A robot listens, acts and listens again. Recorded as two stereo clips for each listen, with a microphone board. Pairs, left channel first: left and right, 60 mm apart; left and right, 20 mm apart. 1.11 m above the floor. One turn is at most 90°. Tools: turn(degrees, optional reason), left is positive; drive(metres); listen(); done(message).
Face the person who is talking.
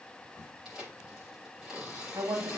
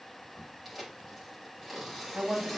turn(degrees=-60, reason="The woman speaking: about 60° right or 120° right.")
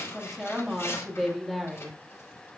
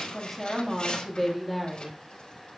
done("Found it: a woman speaking, straight ahead.")